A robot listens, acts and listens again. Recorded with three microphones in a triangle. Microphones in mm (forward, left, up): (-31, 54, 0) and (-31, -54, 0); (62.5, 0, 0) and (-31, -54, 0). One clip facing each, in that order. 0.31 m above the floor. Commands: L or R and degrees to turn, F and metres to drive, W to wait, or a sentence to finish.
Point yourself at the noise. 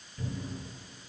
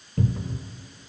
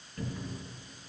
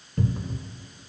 R95
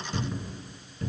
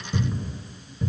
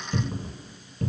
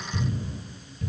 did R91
Found it: a cupboard door, straight ahead, 1 to 2 m away.